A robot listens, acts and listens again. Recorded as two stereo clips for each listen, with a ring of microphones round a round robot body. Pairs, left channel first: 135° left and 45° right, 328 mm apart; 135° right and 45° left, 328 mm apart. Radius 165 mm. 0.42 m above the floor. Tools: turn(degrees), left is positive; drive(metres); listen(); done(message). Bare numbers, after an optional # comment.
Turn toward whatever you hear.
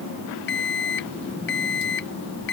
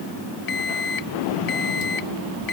# The alarm clock: 165° right.
turn(-165)
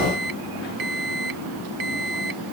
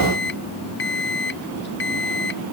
# The alarm clock is now 75° right.
turn(-75)
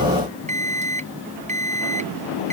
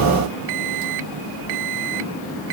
# The alarm clock is now 25° left.
turn(25)
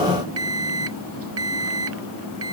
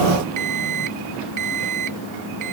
done("Facing the alarm clock.")